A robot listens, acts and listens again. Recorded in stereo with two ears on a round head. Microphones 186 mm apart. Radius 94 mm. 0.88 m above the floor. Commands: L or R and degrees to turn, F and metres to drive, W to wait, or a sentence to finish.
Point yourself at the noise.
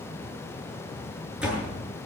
R30
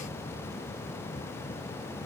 W
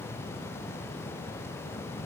I heard a door slam, but can't make it out now. It was about 25° left or 145° right.